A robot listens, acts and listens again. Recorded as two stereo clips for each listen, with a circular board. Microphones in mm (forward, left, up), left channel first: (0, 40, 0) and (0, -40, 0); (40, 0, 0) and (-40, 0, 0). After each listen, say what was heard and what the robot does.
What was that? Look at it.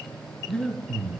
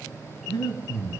The breathing: 15° left. Turn 15° left.
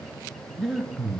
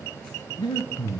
Found it: breathing, straight ahead.